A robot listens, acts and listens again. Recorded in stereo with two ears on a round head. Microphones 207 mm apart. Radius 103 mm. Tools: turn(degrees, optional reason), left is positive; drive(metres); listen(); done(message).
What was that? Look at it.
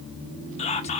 turn(degrees=30, reason="The whispering: about 30° left or 150° left.")
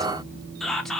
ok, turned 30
done("Found it: whispering, straight ahead.")